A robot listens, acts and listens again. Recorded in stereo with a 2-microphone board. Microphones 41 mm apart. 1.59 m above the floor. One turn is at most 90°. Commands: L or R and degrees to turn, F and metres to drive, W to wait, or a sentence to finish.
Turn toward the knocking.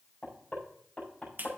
L40
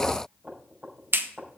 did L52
R15
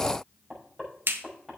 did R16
Found it: knocking, straight ahead.